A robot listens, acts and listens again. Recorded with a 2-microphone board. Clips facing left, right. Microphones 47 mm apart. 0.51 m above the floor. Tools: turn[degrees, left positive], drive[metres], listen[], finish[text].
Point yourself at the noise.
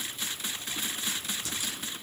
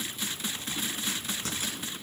Thought: The crack: about 40° right or 140° right.
Action: turn[-40]
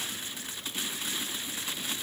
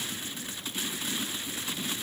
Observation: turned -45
Action: listen[]
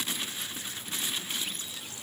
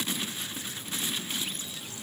Action: finish[I heard a crack, but can't make it out now. It was about 5° left or 95° right.]